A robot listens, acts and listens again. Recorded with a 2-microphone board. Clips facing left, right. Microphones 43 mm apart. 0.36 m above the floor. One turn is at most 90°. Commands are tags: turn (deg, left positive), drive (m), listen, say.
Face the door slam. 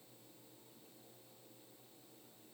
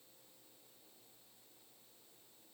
<listen/>
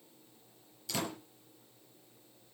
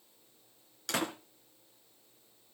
<turn deg="-70"/>
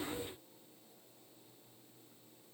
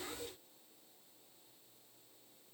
<listen/>
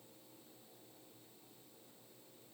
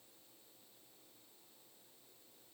<say>I heard a door slam, but can't make it out now. It was about straight ahead or 40° right.</say>